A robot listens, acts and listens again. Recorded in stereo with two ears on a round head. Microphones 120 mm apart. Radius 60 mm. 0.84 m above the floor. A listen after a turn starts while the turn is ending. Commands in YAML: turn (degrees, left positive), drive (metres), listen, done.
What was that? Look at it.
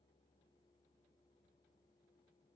listen: true
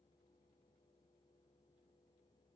listen: true
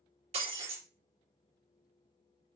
turn: -50
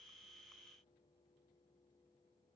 listen: true
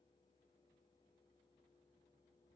done: "I heard breaking glass, but can't make it out now. It was about straight ahead or 80° right."